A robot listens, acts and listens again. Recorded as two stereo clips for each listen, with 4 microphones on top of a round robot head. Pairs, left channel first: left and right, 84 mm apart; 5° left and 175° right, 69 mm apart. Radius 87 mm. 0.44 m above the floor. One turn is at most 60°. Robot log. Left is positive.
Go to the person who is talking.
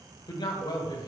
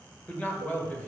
note: The man speaking: 65° left.
cmd yaw +60
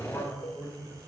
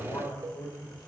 note: The man speaking is now 20° left.
cmd yaw +20
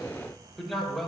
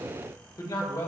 cmd fwd 1.0
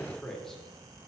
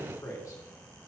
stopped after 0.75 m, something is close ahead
end: I am next to the man speaking.